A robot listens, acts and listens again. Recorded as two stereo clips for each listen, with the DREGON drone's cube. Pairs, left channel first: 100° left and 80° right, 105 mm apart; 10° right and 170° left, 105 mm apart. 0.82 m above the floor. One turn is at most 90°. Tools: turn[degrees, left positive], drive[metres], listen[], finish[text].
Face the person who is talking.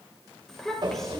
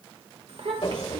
Thought: The child speaking: 175° right.
Action: turn[-90]
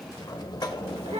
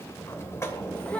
Thought: Nothing new. It was at 85° right.
Action: turn[-85]
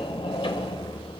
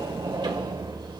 Action: listen[]
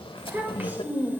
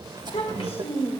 Action: finish[Found it: a child speaking, straight ahead.]